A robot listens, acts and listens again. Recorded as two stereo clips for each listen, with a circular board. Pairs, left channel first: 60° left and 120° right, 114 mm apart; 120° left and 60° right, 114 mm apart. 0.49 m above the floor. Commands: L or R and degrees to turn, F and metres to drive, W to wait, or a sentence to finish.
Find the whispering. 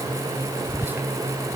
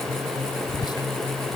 L170
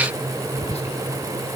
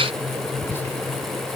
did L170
L50
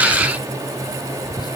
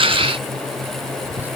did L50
L10
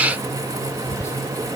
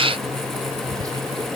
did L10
Facing the whispering.